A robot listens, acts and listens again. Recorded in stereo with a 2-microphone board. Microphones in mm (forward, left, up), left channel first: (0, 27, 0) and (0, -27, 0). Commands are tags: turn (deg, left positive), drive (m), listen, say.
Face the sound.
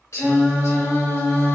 <turn deg="55"/>
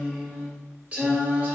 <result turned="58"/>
<turn deg="-35"/>
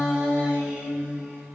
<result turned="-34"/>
<turn deg="-30"/>
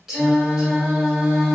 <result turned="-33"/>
<turn deg="-10"/>
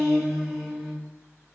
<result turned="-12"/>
<say>Found it: singing, straight ahead, 1 to 2 m away.</say>